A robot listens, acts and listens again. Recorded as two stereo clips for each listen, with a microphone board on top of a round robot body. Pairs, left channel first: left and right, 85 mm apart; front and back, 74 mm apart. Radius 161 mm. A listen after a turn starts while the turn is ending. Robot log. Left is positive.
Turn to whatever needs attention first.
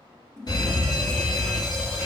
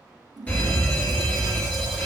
note: The fire alarm: 65° left.
cmd yaw +65
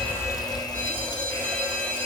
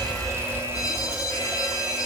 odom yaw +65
note: The fire alarm is now 20° left.
cmd yaw +20
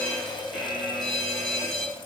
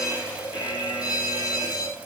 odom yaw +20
end: Found it: a fire alarm, straight ahead.